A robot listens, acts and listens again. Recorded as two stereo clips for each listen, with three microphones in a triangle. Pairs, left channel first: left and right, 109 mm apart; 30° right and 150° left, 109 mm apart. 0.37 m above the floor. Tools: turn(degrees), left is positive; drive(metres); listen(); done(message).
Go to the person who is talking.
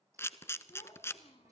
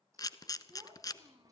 turn(degrees=100)
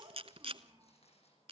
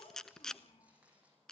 turn(degrees=-40)
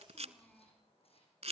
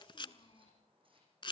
drive(metres=1.0)
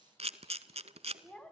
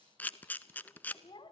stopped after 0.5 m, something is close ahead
done("Blocked. The child speaking is further on, straight ahead.")